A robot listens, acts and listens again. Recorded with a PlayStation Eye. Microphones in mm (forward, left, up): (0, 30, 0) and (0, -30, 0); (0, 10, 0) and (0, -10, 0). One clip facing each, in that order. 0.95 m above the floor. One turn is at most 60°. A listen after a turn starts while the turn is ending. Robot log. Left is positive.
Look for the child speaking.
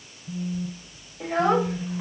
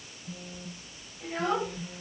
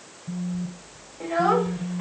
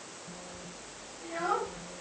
cmd yaw +60
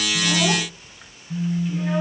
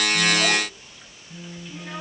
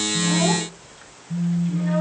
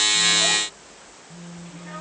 note: Nothing new. It was at 30° left.
cmd yaw +30
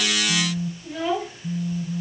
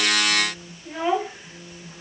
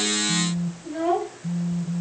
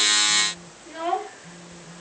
note: The child speaking is now 25° right.
cmd yaw -25
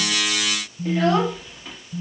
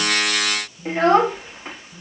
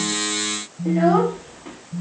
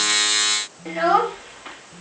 note: The child speaking is now 35° right.
cmd yaw -35
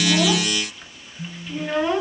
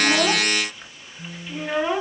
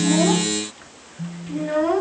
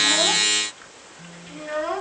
end: Facing the child speaking, 1 to 2 m away.